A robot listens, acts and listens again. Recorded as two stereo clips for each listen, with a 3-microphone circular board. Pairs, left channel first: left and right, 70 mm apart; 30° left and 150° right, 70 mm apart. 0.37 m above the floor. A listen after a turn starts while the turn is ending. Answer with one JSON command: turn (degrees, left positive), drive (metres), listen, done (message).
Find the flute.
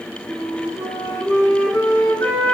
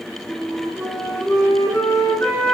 {"turn": 65}
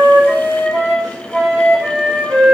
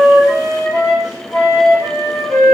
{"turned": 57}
{"turn": 10}
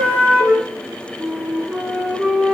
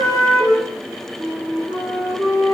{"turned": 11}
{"done": "Facing the flute."}